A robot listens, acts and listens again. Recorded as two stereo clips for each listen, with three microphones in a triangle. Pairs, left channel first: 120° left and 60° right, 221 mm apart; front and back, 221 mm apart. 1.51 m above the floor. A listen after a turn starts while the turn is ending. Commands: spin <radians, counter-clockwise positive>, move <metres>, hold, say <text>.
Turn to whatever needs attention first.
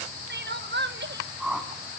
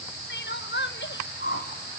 spin -0.52
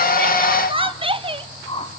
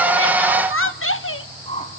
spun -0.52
say Found it: crying, straight ahead.